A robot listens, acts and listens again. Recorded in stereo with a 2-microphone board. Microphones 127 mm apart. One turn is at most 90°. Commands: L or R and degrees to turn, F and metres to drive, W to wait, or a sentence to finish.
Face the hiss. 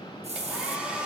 R60
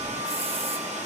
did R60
W
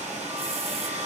W
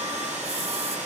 I heard a hiss, but can't make it out now. It was about straight ahead or 60° right.